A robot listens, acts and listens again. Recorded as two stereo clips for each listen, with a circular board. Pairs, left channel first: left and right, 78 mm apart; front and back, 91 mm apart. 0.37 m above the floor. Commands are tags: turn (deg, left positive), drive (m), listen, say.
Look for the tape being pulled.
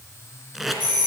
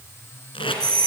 <say>Found it: tape being pulled, straight ahead, 2 to 4 m away.</say>